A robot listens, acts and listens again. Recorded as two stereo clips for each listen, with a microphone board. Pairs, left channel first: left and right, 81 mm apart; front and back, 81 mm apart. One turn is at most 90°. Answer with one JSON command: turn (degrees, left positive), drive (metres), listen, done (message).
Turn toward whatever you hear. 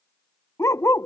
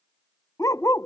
{"turn": 40}
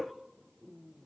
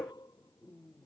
{"listen": true}
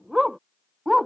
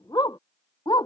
{"done": "Facing the dog barking."}